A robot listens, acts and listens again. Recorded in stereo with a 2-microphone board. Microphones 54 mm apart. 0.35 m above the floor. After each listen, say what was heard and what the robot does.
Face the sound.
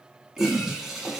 Turn 30° right.
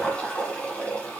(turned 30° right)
So it is at 20° left. Turn 20° left.
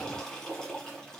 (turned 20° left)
The toilet flushing is now 10° left. Turn 10° left.
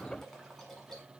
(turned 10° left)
Facing the toilet flushing.